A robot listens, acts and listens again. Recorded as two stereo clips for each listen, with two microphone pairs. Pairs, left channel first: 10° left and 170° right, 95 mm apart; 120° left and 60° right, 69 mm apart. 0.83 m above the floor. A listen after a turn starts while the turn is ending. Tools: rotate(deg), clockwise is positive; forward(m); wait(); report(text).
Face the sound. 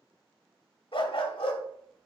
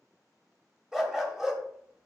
rotate(-25)
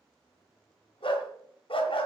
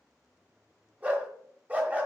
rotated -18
rotate(-10)
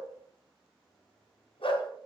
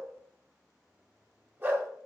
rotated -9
report("Facing the dog barking.")